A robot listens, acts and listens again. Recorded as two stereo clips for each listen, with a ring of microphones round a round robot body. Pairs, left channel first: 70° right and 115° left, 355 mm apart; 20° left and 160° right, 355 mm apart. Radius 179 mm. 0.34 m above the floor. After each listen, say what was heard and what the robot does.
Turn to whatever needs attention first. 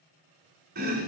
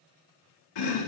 Keep listening.
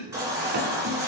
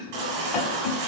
The baby crying: 165° right. Turn 165° right.
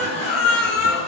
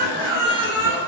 The baby crying is now 40° right. Turn 40° right.
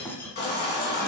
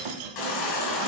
Found it: a baby crying, straight ahead.